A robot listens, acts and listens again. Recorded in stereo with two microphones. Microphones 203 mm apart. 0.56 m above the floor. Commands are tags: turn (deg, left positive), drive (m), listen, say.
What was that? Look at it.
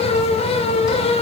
<listen/>
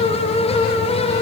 <listen/>
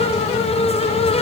<say>I can't make out anything to turn to.</say>